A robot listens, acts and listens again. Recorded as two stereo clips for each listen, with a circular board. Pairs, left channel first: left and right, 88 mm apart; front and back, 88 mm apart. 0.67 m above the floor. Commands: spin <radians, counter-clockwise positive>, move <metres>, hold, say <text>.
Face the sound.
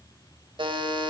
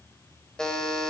spin -1.40
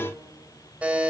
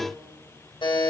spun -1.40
spin -0.26
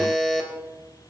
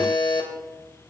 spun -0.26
say Found it: a buzzer, straight ahead, 2 to 4 m away.